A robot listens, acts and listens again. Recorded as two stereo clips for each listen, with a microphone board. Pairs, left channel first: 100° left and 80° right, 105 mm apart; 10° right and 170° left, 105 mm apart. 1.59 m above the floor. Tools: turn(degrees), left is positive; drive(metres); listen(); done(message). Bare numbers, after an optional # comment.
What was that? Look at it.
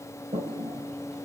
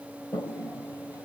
# The toilet flushing: 75° right.
turn(-75)
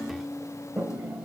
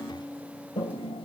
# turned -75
done("Found it: a toilet flushing, straight ahead, 2 to 4 m away.")